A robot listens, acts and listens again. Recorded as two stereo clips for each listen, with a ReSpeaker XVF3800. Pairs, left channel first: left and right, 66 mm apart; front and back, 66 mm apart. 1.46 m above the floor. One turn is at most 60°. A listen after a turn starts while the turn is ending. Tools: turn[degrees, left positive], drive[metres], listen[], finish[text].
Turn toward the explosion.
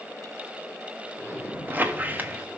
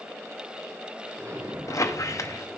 Thought: The explosion: 150° right.
Action: turn[-60]
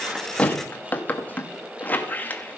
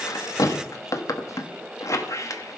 Thought: Nothing new. It was at 90° right.
Action: turn[-60]
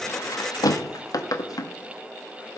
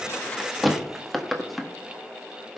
Thought: Nothing new. It was at 30° right.
Action: turn[-30]
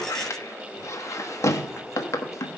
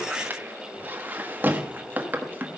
Action: finish[Facing where the explosion came from. I can't hear it now.]